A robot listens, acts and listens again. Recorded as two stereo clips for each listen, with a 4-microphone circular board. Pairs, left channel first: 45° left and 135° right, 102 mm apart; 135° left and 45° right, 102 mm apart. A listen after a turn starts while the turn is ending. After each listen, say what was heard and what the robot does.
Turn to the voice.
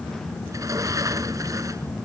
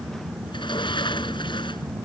Keep listening.
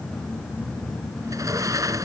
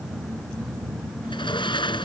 Keep listening.
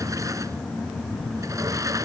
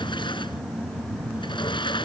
I can't make out anyone speaking to turn to.